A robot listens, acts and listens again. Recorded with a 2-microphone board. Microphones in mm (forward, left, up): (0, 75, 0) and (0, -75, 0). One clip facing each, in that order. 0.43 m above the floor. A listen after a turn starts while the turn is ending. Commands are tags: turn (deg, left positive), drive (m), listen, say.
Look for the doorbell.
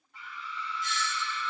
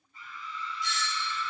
<turn deg="50"/>
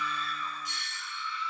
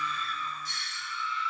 <turn deg="20"/>
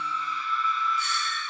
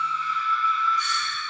<listen/>
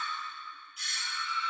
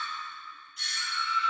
<say>Facing the doorbell, 2 to 4 m away.</say>